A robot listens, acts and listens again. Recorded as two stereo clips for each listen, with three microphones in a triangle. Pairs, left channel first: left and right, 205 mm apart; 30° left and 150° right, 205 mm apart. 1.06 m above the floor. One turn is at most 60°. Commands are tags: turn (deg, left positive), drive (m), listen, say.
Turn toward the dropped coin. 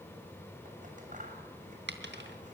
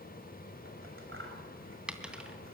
<turn deg="-60"/>
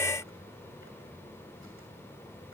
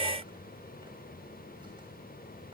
<say>Facing where the dropped coin came from. I can't hear it now.</say>